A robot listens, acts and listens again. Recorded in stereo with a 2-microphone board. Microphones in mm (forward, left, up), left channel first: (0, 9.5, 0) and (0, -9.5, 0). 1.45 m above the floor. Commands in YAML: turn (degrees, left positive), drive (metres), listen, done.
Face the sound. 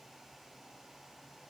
listen: true
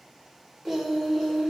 turn: 30
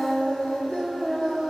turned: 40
turn: 115
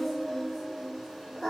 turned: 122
turn: -15
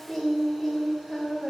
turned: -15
done: "Facing the singing, 2 to 4 m away."